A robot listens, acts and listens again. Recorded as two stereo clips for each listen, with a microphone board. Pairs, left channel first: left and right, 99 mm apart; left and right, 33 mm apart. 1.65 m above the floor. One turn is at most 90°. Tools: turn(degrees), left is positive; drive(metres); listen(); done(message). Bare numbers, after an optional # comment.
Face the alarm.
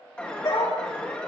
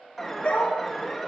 turn(30)
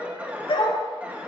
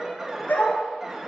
# So it is at 15° right.
turn(-15)
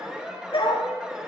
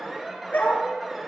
# The alarm is now 10° right.
turn(-10)
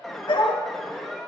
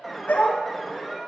done("Found it: an alarm, straight ahead, 1 to 2 m away.")